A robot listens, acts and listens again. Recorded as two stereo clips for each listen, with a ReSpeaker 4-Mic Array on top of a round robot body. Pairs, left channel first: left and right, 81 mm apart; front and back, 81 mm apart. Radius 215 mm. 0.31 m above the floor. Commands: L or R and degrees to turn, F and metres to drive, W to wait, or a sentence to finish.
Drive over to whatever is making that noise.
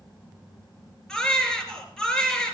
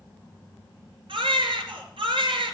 L175
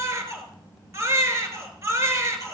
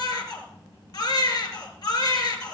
R35
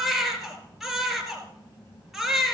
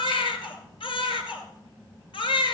F1.0
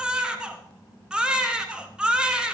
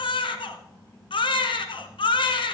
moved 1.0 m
R10
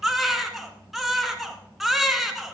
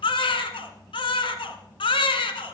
F1.0
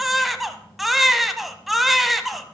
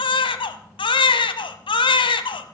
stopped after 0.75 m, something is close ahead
I am next to the baby crying.